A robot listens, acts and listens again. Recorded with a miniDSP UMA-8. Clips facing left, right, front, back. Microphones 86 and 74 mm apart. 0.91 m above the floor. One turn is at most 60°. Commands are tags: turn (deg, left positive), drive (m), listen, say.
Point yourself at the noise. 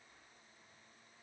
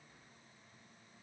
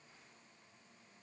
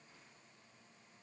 <listen/>
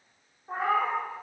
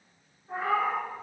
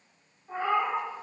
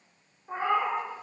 <turn deg="60"/>
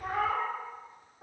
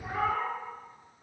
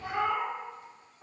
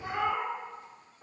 <turn deg="60"/>
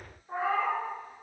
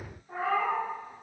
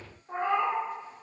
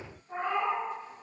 <turn deg="30"/>
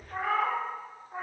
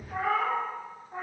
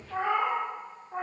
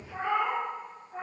<say>Found it: a cat meowing, straight ahead, under 1 m away.</say>